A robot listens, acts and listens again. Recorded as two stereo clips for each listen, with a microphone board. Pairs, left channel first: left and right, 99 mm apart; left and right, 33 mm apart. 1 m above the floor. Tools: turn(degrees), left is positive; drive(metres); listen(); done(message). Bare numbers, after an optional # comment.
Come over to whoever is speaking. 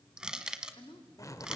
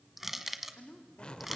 # The woman speaking: about 55° left or 125° left.
turn(55)
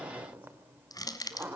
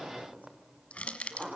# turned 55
listen()
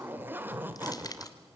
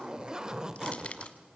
listen()
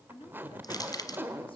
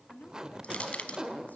# So it is at 65° left.
turn(65)
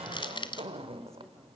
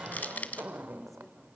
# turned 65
listen()
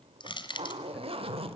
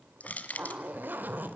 listen()
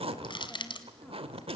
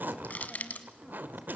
done("I heard a woman speaking from this way, but can't make it out now. I did not reach it.")